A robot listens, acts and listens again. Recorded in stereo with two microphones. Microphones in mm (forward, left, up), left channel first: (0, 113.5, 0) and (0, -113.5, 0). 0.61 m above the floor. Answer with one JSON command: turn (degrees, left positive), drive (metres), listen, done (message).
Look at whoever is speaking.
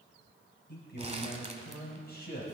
{"turn": 45}
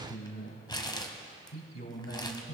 {"turn": 105}
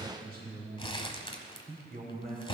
{"turn": -40}
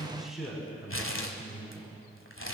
{"done": "Found it: a man speaking, straight ahead."}